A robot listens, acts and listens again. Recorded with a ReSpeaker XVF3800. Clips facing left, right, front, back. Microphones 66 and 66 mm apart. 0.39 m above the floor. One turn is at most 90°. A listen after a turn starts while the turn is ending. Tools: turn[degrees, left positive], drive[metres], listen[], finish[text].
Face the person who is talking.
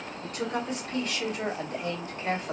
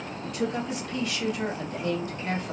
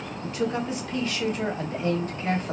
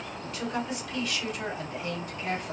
Thought: The woman speaking: 35° left.
Action: turn[35]
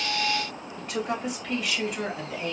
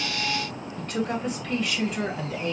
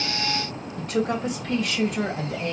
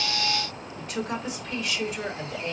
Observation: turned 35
Action: finish[Facing the woman speaking, 1 to 2 m away.]